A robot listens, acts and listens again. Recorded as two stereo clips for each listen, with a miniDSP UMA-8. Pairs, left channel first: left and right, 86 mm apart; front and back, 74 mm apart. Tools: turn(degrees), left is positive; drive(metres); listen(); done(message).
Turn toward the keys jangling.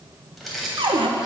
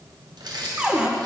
turn(degrees=180)
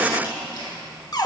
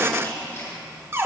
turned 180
turn(degrees=60)
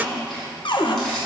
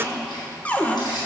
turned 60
turn(degrees=10)
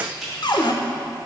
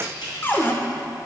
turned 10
done("Found it: keys jangling, straight ahead.")